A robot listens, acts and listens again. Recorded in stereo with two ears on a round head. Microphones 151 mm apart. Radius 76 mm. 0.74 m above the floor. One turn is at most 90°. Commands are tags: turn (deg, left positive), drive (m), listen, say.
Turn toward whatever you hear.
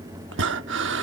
<turn deg="-70"/>
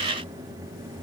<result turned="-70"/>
<listen/>
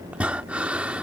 <say>Facing the breathing.</say>